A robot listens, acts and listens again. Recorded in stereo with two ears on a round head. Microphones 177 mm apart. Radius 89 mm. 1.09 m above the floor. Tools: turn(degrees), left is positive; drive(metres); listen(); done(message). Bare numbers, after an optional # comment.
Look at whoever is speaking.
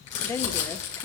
# The woman speaking: about 15° left or 165° left.
turn(15)
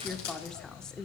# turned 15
done("Facing the woman speaking, under 1 m away.")